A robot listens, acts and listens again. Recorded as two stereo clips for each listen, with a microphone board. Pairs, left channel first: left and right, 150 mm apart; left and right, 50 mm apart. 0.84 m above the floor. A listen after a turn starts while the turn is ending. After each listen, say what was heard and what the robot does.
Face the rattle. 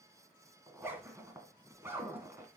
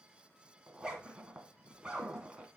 Keep listening.
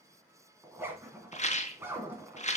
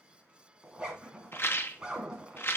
The rattle: about 50° left or 130° left. Turn 50° left.
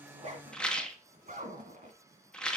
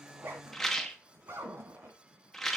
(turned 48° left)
Found it: a rattle, straight ahead.